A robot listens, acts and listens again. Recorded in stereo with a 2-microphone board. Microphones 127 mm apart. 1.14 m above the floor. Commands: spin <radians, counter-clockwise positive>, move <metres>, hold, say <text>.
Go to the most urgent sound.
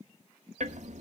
hold
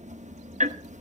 hold
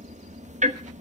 say I can't make out anything urgent to turn to.